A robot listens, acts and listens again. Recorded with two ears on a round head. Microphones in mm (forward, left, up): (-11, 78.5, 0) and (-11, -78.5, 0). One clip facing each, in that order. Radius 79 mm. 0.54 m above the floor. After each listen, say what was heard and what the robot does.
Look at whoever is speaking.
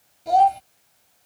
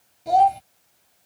Turn 30° left.
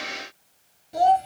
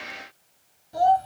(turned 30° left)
So it is at 155° left. Turn 155° left.
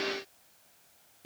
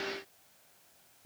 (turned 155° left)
The child speaking is now 55° left. Turn 55° left.
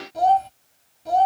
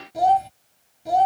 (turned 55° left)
The child speaking is now 10° right. Turn 10° right.
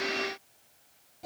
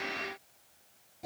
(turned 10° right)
Facing the child speaking.